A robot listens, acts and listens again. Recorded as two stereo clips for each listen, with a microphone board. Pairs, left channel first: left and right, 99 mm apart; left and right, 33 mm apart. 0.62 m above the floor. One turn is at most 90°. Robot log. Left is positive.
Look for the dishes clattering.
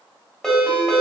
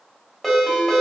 cmd idle
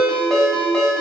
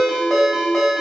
cmd idle
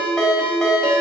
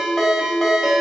end: I can't make out dishes clattering to turn to.